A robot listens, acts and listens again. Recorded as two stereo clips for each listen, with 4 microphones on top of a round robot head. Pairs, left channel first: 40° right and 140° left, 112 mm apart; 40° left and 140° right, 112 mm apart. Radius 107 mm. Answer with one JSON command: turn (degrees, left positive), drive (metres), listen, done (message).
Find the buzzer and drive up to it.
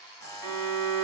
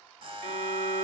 {"turn": -100}
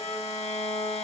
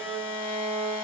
{"listen": true}
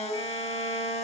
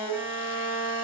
{"listen": true}
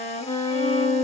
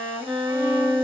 {"done": "I heard a buzzer from this way, but can't make it out now. I did not reach it."}